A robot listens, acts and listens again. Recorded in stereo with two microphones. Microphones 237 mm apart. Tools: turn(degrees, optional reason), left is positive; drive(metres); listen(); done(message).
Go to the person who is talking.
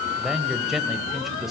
turn(degrees=30)
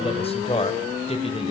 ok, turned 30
turn(degrees=150, reason="So it is at 150° left.")
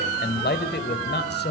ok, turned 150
turn(degrees=55, reason="The man speaking is now 55° left.")
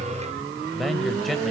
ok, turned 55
drive(metres=1.0)
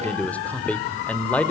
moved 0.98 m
turn(degrees=10, reason="The man speaking is now 10° left.")
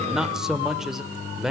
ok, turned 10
drive(metres=1.0)
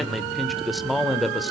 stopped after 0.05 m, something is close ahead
done("I am next to the man speaking.")